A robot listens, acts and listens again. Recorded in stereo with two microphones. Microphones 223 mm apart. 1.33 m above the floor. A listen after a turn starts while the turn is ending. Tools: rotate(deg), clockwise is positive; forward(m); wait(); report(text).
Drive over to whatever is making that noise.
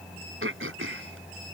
rotate(70)
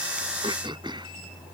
rotate(20)
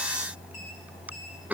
forward(1.0)
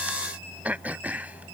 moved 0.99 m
rotate(10)
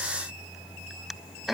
forward(1.0)
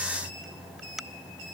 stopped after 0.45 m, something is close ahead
report("Arrived at the throat clearing, straight ahead.")